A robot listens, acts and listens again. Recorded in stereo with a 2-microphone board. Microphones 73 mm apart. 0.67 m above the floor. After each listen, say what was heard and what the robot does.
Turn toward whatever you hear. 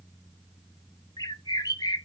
The bird: about 65° left or 115° left. Turn 65° left.
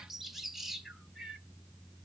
Found it: a bird, straight ahead, under 1 m away.